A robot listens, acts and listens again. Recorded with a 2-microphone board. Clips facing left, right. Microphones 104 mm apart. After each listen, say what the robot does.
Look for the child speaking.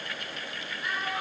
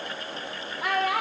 Turn 90° right.
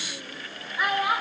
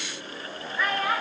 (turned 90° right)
Turn 15° left.
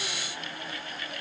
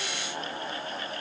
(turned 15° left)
Keep listening.
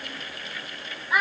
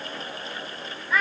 Turn 15° left.
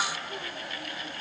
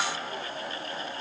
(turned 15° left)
Keep listening.
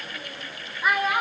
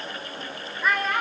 Turn 10° left.
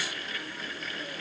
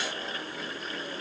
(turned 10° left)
Keep listening.
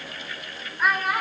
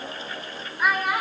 Found it: a child speaking, straight ahead, 2 to 4 m away.